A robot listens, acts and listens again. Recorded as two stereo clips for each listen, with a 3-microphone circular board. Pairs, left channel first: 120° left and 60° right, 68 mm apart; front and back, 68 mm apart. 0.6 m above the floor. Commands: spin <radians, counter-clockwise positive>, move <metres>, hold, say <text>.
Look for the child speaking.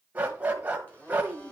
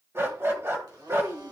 spin 2.44
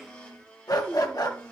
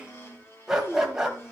spin 0.26
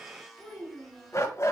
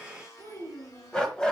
say Facing the child speaking.